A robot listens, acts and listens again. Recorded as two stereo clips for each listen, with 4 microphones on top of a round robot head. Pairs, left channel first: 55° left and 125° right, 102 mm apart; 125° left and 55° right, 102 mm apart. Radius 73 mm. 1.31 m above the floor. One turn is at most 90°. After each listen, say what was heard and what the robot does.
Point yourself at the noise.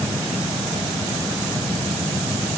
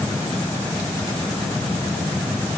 Keep listening.
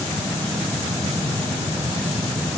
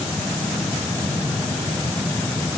Keep listening.
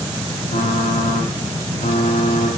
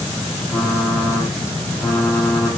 The typing on a keyboard: 45° left. Turn 45° left.
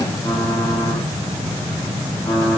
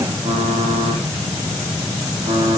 Facing the typing on a keyboard, 2 to 4 m away.